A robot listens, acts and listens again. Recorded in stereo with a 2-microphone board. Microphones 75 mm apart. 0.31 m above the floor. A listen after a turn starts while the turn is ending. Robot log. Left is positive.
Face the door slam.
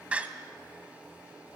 note: The door slam: about 15° right or 165° right.
cmd yaw -15
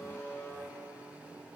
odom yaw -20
cmd idle
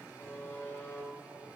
end: I heard a door slam, but can't make it out now. It was about 5° left or 145° right.